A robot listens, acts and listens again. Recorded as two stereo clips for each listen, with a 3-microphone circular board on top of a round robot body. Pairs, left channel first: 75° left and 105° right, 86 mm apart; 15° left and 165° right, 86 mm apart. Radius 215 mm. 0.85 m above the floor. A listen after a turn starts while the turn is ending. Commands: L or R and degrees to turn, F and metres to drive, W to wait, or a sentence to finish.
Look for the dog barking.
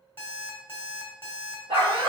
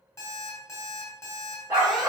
R100
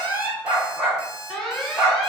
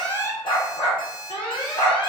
R20
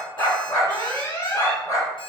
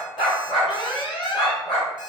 L15
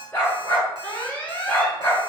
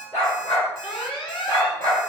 Found it: a dog barking, straight ahead.